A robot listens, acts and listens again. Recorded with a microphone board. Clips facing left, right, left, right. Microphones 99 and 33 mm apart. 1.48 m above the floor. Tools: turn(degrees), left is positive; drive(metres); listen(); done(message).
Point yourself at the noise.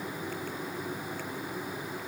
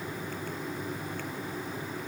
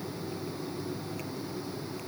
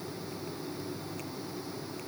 listen()
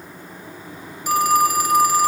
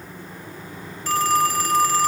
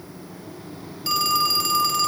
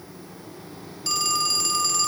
turn(degrees=30)
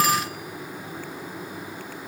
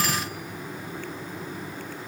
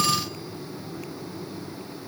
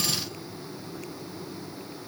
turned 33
listen()
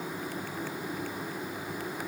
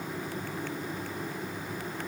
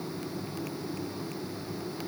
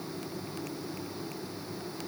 listen()
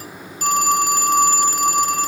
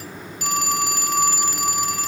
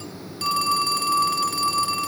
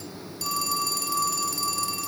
turn(degrees=135)
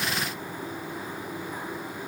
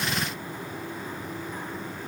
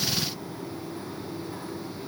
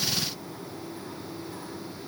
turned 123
turn(degrees=10)
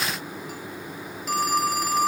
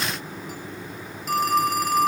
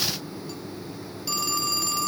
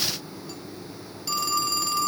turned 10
done("Facing the phone ringing, 1 to 2 m away.")